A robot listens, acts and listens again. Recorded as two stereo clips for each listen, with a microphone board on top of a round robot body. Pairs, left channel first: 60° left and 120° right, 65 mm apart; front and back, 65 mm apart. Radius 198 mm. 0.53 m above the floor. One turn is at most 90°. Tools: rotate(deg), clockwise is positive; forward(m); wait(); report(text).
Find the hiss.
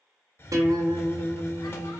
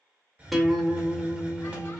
rotate(-90)
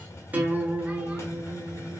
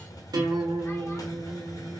rotate(-15)
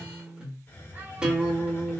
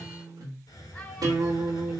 report("Found it: a hiss, straight ahead, under 1 m away.")